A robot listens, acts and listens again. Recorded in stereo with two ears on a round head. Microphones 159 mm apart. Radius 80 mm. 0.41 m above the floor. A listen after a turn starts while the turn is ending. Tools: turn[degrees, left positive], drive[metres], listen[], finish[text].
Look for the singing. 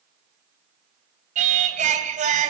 Thought: The singing: about 45° right or 135° right.
Action: turn[-45]
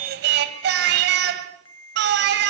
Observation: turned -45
Thought: So it is at 85° right.
Action: turn[-85]
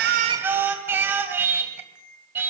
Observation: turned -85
Thought: The singing is now 15° right.
Action: turn[-15]
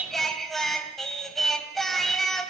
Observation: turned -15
Action: finish[Facing the singing.]